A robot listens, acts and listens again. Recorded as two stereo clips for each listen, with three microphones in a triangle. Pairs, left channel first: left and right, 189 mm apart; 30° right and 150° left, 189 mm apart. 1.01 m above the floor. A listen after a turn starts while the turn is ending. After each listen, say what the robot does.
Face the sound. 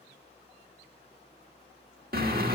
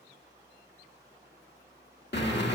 Turn 55° right.
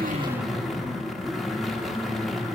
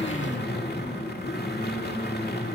Facing the drill.